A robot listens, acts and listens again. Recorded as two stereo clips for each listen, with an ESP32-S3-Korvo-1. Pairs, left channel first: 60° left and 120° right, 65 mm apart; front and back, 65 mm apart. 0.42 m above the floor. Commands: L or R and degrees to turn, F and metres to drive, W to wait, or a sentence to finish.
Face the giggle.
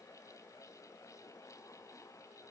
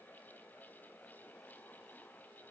W
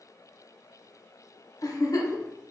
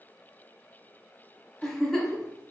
L85
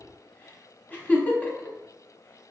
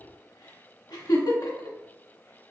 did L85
Found it: a giggle, straight ahead.